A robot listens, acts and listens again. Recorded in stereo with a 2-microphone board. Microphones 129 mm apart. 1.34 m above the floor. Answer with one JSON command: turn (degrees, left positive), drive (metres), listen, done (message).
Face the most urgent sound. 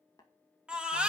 {"turn": -30}
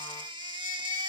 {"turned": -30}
{"turn": -145}
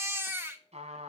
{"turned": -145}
{"turn": -20}
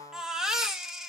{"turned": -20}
{"done": "Facing the baby crying, 1 to 2 m away."}